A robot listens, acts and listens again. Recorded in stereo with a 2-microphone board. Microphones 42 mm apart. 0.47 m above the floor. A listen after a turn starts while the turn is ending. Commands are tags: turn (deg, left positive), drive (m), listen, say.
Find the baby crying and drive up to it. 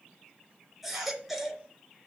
<turn deg="-30"/>
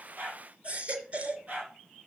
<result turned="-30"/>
<turn deg="-145"/>
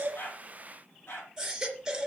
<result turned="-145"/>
<turn deg="-10"/>
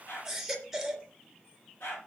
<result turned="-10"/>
<drive m="1.0"/>
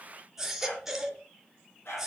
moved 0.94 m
<drive m="1.0"/>
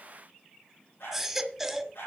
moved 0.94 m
<drive m="1.0"/>
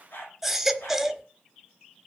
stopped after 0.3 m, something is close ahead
<say>Arrived at the baby crying, straight ahead.</say>